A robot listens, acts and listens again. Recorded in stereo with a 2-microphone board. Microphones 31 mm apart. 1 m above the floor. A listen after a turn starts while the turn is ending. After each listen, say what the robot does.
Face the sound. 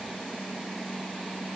Keep listening.
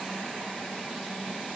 Keep listening.
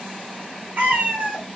Turn 65° right.
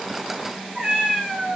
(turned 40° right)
Turn 35° right.
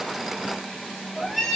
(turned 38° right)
Found it: a cat meowing, straight ahead.